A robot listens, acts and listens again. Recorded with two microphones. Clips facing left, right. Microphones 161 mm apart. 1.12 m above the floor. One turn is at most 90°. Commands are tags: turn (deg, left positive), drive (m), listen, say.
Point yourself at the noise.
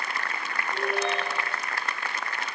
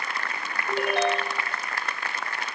<turn deg="-90"/>
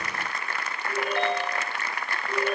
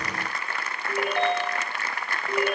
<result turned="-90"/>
<turn deg="-15"/>
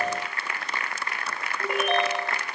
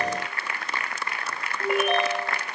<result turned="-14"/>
<say>Facing the ringtone, over 4 m away.</say>